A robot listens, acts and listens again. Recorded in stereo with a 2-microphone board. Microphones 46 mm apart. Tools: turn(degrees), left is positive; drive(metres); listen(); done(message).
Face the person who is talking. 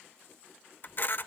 listen()
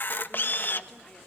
listen()
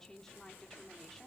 turn(degrees=30)
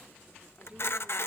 turn(degrees=-25)
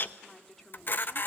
turn(degrees=10)
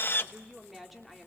done("Facing the woman speaking.")